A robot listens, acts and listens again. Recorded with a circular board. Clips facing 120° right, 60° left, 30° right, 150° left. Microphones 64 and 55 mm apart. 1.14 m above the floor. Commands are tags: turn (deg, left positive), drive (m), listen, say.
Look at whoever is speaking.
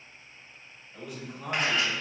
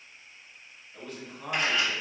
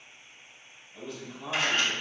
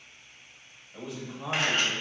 <turn deg="160"/>
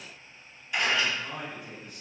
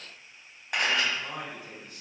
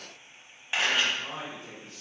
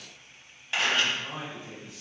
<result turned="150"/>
<turn deg="10"/>
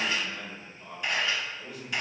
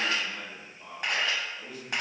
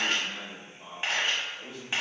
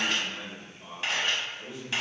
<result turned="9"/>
<say>Found it: a man speaking, straight ahead.</say>